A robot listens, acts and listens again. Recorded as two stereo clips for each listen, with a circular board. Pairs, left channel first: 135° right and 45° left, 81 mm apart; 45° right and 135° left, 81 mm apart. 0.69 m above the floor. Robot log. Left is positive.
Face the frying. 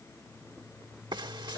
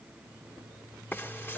note: The frying: 20° left.
cmd yaw +20
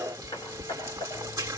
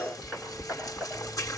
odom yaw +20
end: Found it: frying, straight ahead, 1 to 2 m away.